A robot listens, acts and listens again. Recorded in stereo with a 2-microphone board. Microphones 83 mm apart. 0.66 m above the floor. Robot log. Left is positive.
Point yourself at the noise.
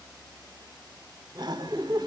note: The laughter: about 60° right or 120° right.
cmd yaw -60
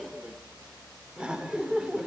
note: So it is at 10° right.
cmd yaw -10
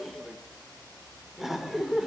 end: Facing the laughter.